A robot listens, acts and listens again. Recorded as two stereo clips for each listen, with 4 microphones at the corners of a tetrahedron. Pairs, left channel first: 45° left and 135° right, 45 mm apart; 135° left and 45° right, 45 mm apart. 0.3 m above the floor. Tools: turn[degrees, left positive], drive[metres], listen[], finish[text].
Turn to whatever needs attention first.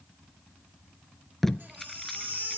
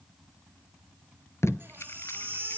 Thought: The baby crying: 85° right.
Action: turn[-85]
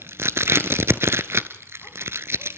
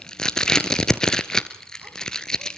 Action: listen[]
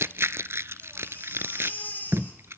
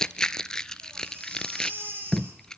Action: finish[Found it: a baby crying, straight ahead, over 4 m away.]